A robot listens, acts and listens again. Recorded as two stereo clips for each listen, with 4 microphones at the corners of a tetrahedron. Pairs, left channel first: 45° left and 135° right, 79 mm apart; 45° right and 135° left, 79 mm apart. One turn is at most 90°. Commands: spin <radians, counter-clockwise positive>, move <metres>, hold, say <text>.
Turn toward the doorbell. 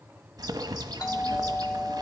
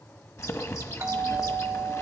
spin 1.40
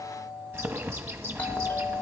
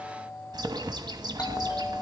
spin -0.35
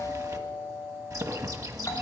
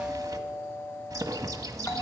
say Facing the doorbell.